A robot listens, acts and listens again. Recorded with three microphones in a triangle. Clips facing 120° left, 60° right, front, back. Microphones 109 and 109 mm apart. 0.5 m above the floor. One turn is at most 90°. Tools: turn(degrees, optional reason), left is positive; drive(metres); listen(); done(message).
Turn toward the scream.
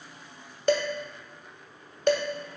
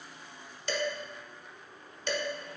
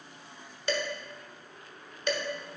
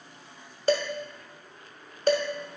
listen()
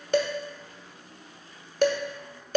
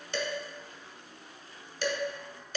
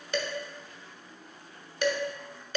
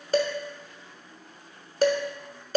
listen()
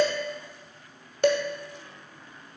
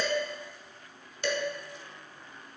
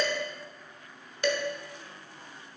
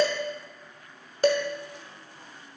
done("I can't make out a scream, only dishes clattering.")